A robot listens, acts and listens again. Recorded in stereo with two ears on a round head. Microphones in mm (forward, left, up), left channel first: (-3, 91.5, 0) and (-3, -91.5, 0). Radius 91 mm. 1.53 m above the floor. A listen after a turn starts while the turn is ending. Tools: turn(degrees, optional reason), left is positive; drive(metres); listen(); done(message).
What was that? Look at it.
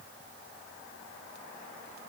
listen()
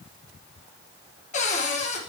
turn(degrees=40, reason="The cupboard door: about 40° left or 140° left.")
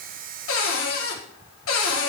turn(degrees=100, reason="So it is at 100° left.")
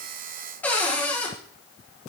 turn(degrees=10, reason="The cupboard door is now 10° left.")
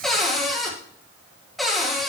done("Facing the cupboard door, 1 to 2 m away.")